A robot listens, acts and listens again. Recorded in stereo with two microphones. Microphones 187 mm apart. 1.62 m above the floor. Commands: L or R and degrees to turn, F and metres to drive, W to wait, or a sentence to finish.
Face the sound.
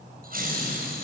R55
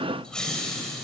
Facing the laughter, over 4 m away.